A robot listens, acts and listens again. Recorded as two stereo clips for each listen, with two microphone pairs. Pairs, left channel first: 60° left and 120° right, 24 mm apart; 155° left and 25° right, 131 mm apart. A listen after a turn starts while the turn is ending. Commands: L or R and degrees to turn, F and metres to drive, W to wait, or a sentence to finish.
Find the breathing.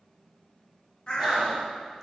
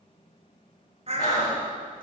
L140
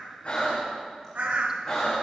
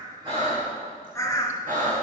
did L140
R15
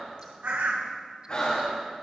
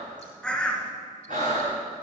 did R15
Found it: breathing, straight ahead.